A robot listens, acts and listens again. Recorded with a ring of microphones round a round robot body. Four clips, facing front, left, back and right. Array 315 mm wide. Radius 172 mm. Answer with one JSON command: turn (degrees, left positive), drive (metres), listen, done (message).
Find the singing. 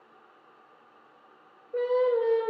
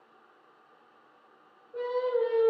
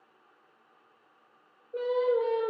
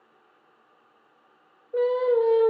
{"turn": -90}
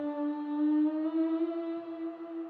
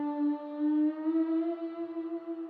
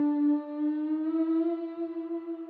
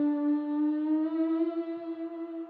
{"turn": -65}
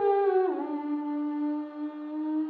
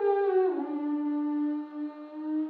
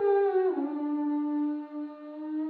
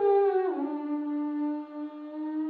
{"done": "Facing the singing."}